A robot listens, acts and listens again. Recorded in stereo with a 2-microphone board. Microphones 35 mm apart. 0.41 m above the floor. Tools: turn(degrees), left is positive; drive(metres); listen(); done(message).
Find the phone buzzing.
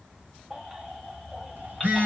turn(degrees=-50)
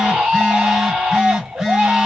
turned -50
turn(degrees=-15)
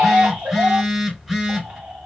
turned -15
done("Facing the phone buzzing, 1 to 2 m away.")